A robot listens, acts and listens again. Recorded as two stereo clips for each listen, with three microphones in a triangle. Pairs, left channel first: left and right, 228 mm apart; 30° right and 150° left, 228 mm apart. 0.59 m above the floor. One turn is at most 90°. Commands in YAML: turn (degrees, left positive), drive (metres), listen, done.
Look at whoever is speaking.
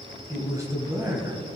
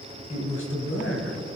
turn: -15
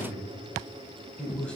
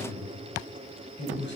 done: "Found it: a man speaking, straight ahead, 2 to 4 m away."